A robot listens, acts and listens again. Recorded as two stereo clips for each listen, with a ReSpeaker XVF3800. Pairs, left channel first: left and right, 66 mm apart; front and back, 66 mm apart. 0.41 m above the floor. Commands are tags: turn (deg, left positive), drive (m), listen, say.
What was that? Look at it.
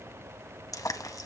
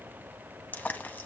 <turn deg="60"/>
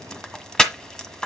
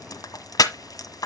<turn deg="10"/>
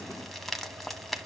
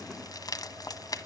<listen/>
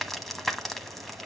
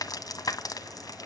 <say>Found it: frying, straight ahead.</say>